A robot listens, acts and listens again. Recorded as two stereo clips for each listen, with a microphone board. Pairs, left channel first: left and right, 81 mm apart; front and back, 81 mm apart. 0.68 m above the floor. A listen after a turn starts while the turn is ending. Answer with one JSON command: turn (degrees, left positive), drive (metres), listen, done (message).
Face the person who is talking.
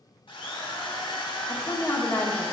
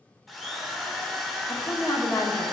{"turn": 35}
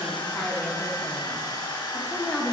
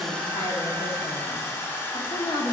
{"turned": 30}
{"done": "Facing the woman speaking, 1 to 2 m away."}